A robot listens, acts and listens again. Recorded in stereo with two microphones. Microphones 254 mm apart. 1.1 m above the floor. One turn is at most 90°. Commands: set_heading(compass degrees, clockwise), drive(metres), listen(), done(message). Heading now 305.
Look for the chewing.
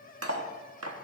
listen()
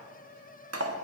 listen()
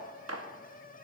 done("I can't make out chewing, only cutlery clinking.")